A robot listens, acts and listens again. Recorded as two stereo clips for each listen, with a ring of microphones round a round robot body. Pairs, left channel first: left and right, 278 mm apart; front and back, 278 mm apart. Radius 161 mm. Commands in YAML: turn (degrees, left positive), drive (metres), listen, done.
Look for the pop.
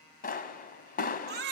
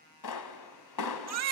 turn: 30
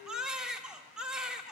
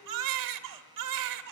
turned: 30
done: "I heard a pop from this way, but can't make it out now."